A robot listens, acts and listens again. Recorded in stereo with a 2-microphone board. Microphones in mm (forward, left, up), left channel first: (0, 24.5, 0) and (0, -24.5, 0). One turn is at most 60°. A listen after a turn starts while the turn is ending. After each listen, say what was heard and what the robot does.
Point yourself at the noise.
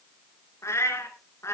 The cat meowing: about 70° left or 110° left. Turn 60° left.
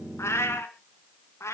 So it is at 75° left. Turn 60° left.
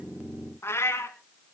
The cat meowing is now 70° left. Turn 60° left.
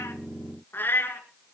The cat meowing is now 50° left. Turn 50° left.
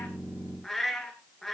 Facing the cat meowing.